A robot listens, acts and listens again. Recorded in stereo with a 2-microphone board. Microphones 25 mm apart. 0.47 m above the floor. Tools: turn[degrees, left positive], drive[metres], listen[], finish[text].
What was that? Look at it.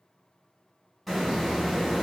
Action: turn[30]
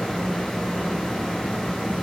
Thought: So it is at 145° left.
Action: turn[145]
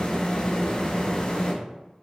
Thought: The hiss is now 45° left.
Action: turn[45]
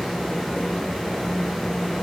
Thought: The hiss is now 10° right.
Action: turn[-10]
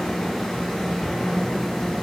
Action: finish[Facing the hiss, 1 to 2 m away.]